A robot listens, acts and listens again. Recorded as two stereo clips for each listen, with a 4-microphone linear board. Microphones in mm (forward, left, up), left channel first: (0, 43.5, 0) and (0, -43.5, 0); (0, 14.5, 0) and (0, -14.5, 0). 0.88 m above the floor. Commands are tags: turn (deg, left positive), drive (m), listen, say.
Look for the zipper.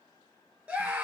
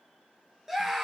<listen/>
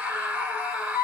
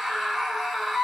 <listen/>
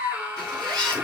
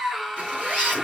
<turn deg="-50"/>
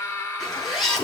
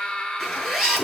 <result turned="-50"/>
<say>Facing the zipper, over 4 m away.</say>